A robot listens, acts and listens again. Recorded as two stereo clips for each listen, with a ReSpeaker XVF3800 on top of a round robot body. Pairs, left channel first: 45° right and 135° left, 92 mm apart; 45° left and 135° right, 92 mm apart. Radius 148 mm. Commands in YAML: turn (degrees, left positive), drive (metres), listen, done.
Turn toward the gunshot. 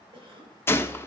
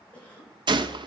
turn: -105
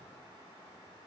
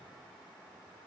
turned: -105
done: "I heard a gunshot from this way, but can't make it out now."